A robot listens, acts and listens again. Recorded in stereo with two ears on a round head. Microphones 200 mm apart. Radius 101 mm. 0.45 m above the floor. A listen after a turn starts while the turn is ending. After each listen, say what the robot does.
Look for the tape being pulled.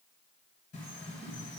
Keep listening.
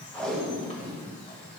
Turn 30° left.
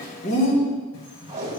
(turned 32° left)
Turn 30° right.
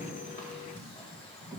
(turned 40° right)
Turn 10° left.
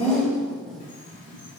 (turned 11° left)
Found it: tape being pulled, straight ahead, 2 to 4 m away.